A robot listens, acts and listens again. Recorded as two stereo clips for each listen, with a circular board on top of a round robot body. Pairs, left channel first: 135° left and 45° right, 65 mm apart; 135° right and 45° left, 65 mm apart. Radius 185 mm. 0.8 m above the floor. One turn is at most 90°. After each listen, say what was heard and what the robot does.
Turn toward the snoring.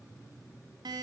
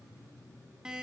Keep listening.
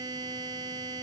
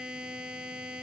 Keep listening.
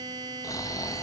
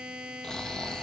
The snoring: 145° left. Turn 90° left.
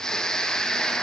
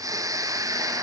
The snoring is now 55° left. Turn 55° left.
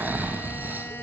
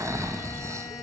The snoring is now 15° left. Turn 15° left.
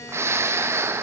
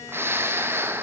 Found it: snoring, straight ahead.